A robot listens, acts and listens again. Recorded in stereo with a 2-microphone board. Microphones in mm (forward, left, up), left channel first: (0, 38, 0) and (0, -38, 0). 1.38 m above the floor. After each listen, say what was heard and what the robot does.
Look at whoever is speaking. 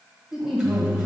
Turn 30° right.
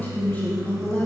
So it is at 25° left. Turn 25° left.
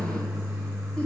Keep listening.
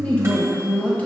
The woman speaking is now 20° left. Turn 20° left.
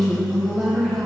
Found it: a woman speaking, straight ahead.